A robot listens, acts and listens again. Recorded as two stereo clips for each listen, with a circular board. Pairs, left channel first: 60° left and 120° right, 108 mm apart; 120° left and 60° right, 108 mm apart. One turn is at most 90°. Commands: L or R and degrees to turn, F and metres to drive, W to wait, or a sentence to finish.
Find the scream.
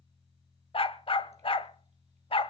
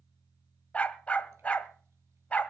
W
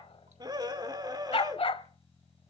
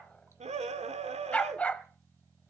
R65
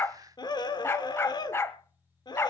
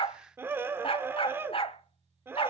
L10
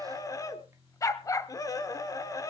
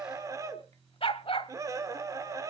Facing the scream.